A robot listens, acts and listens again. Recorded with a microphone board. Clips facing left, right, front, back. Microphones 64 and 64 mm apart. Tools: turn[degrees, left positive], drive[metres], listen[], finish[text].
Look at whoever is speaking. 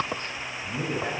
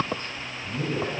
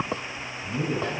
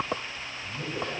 Thought: The man speaking: 45° left.
Action: turn[45]
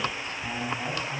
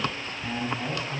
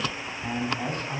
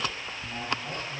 Action: finish[Found it: a man speaking, straight ahead.]